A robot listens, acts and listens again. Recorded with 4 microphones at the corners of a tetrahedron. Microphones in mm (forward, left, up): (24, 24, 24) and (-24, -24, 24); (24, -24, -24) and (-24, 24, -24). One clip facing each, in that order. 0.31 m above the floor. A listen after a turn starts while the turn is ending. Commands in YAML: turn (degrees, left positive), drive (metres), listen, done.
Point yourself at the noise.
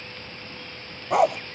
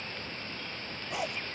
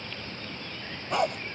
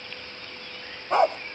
turn: 75
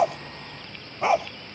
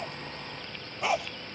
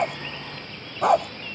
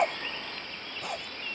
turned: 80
turn: -20
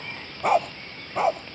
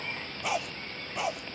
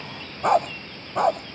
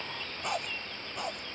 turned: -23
turn: -10
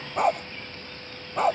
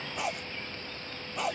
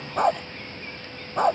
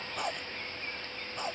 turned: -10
turn: -10
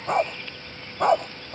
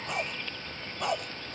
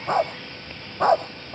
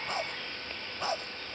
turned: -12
done: "Found it: a dog barking, straight ahead."